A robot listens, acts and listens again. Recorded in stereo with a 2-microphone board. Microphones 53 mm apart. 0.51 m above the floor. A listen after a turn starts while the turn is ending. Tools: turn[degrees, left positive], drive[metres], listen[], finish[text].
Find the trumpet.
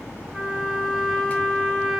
Action: turn[-30]
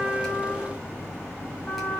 Thought: So it is at 25° left.
Action: turn[25]
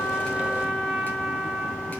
Thought: The trumpet is now 10° right.
Action: turn[-10]
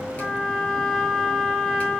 Action: finish[Facing the trumpet.]